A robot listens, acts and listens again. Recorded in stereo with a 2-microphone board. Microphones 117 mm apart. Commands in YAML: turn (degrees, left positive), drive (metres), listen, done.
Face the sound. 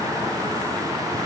listen: true
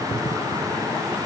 listen: true
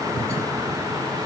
done: "I can't make out anything."